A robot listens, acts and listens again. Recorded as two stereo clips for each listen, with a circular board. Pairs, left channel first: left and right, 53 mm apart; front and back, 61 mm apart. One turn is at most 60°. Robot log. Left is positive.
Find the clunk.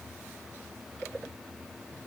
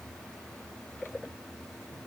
cmd idle
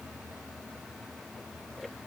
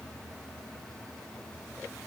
cmd idle
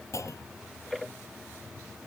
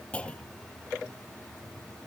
note: The clunk: 70° left.
cmd yaw +60
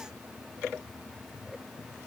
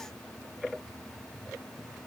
note: Nothing new. It was at 10° left.
cmd yaw +10
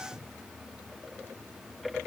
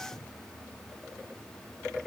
end: I heard a clunk from this way, but can't make it out now.